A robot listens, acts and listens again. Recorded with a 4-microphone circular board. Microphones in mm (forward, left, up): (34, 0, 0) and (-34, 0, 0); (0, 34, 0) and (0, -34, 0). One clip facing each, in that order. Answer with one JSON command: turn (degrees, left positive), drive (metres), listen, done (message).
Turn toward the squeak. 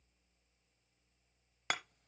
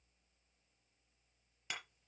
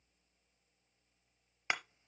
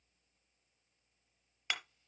{"listen": true}
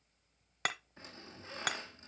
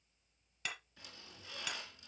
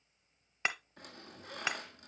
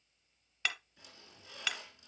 {"turn": 55}
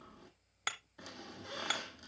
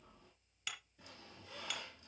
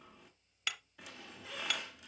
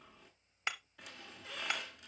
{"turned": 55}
{"done": "Facing the squeak, 1 to 2 m away."}